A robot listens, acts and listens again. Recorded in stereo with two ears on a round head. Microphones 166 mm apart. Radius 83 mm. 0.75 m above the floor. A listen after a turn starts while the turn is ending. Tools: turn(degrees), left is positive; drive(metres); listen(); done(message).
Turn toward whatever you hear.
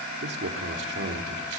turn(degrees=-65)
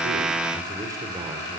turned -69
turn(degrees=-20)
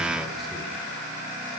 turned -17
listen()
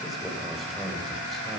done("Found it: a man speaking, straight ahead, over 4 m away.")